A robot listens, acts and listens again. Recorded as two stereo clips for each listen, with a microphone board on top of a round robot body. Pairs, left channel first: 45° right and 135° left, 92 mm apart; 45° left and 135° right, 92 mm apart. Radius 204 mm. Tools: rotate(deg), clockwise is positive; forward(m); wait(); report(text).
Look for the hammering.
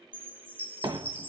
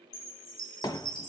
rotate(-95)
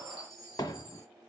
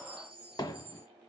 report("Facing the hammering.")